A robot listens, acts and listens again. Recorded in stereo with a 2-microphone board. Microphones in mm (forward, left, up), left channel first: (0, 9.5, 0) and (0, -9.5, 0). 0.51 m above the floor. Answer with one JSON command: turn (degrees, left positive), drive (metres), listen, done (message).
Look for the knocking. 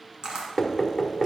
{"turn": 30}
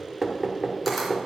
{"turn": -20}
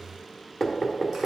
{"done": "Facing the knocking."}